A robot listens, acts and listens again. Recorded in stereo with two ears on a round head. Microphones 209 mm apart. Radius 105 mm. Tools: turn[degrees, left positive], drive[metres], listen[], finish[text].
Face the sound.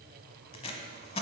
Thought: The tape being pulled: about 25° left or 155° left.
Action: turn[25]
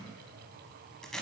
Action: finish[Facing the tape being pulled.]